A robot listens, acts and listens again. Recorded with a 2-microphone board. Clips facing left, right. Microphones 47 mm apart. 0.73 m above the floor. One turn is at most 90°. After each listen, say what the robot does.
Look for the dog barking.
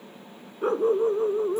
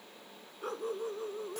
Turn 35° left.
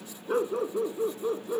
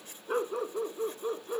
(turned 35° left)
Found it: a dog barking, straight ahead.